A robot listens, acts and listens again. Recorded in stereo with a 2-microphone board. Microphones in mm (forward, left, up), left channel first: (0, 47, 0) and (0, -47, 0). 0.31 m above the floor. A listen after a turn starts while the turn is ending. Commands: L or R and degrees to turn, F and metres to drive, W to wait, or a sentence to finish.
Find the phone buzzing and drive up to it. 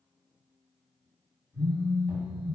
L20
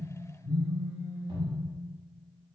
L10
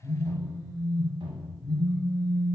F1.0
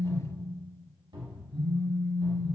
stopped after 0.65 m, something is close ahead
I am next to the phone buzzing.